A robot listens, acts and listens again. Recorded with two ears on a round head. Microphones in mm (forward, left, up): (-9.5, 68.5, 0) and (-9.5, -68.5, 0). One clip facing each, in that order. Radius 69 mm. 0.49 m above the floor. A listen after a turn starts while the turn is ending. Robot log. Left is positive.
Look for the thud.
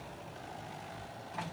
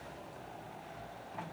cmd idle
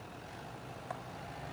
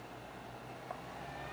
cmd idle
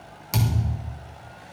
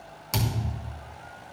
cmd yaw +30
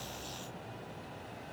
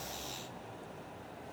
cmd idle
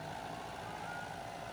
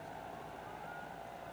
end: I heard a thud, but can't make it out now. It was about 25° right or 145° left.